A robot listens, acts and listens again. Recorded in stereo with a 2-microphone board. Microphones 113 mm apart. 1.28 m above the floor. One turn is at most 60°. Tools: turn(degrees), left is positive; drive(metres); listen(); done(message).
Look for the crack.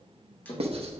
turn(degrees=60)
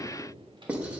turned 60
listen()
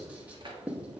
done("I heard a crack, but can't make it out now. It was about 10° left or 50° left.")